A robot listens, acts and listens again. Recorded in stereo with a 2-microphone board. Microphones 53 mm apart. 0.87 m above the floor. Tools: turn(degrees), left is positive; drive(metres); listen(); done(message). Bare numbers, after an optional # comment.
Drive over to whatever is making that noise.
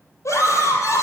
turn(90)
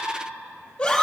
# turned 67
# So it is at 15° left.
turn(15)
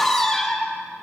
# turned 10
drive(1.0)
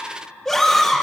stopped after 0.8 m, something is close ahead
done("Blocked. The scream is further on, straight ahead.")